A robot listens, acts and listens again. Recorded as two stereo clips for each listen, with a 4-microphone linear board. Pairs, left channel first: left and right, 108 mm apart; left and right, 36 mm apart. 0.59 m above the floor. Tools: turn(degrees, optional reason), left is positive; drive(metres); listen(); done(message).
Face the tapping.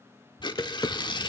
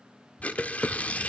turn(degrees=35, reason="The tapping: about 35° left or 145° left.")
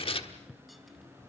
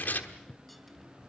done("Found it: tapping, straight ahead, 1 to 2 m away.")